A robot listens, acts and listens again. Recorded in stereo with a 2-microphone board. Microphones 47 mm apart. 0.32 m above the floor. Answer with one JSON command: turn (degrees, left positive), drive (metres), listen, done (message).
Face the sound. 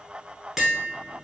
{"turn": -30}
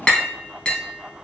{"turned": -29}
{"turn": 25}
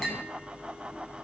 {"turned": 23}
{"listen": true}
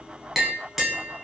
{"done": "Found it: tapping, straight ahead, under 1 m away."}